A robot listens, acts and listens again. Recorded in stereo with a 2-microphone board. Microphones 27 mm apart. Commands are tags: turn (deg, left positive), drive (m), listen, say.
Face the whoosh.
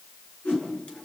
<turn deg="90"/>
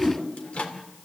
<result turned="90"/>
<turn deg="-10"/>
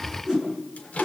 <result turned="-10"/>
<say>Facing the whoosh.</say>